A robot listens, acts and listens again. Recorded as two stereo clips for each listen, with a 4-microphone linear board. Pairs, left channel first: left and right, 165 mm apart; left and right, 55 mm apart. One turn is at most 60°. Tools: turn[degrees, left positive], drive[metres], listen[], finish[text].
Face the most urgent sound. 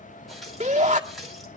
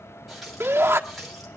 Thought: The shout: about 45° right or 135° right.
Action: turn[-45]
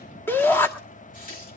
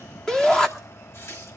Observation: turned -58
Thought: So it is at 15° left.
Action: turn[15]
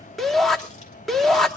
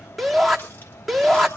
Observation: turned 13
Action: finish[Found it: a shout, straight ahead, 1 to 2 m away.]